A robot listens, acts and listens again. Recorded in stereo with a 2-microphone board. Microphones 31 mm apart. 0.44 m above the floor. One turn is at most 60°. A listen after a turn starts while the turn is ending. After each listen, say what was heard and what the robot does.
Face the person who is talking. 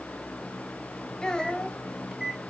The child speaking: about 25° left or 155° left. Turn 25° left.
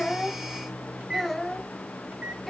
Found it: a child speaking, straight ahead.